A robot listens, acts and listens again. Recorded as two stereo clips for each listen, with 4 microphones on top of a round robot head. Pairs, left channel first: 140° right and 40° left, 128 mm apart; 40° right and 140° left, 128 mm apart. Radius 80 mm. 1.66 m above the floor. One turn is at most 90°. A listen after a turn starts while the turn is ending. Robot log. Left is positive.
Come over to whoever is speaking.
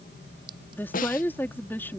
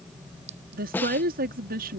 note: The woman speaking: 145° left.
cmd yaw +90
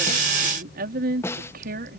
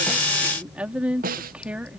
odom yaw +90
note: The woman speaking is now 55° left.
cmd yaw +55
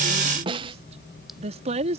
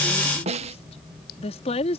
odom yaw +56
cmd fwd 1.0
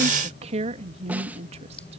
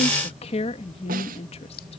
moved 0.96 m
cmd fwd 1.0
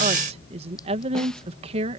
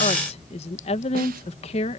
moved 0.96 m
cmd fwd 1.0
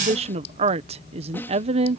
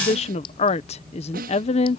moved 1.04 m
cmd fwd 1.0
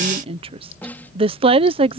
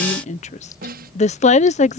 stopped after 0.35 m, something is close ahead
end: Arrived at the woman speaking, straight ahead.